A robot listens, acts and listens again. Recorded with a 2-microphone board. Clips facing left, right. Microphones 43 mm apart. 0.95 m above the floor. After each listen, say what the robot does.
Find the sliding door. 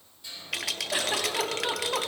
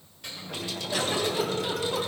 Turn 70° right.
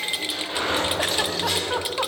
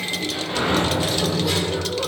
Facing the sliding door, 2 to 4 m away.